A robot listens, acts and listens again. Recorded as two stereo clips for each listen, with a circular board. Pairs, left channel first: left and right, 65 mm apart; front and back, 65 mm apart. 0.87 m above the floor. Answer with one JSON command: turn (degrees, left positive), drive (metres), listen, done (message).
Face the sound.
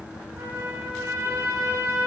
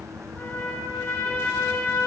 {"turn": -55}
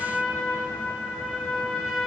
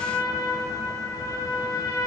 {"done": "Found it: a trumpet, straight ahead."}